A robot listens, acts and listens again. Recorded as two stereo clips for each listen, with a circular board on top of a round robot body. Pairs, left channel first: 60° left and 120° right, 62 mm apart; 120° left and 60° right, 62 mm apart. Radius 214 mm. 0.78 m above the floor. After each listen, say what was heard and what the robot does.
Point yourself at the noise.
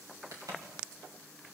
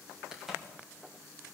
The crack: 145° right. Turn 145° right.
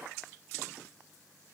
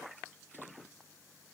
Facing where the crack came from. I can't hear it now.